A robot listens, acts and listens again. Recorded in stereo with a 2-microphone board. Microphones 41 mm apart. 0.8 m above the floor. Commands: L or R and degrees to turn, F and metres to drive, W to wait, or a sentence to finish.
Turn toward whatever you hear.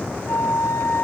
L90
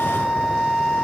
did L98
R10
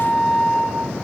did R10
Found it: a flute, straight ahead, over 4 m away.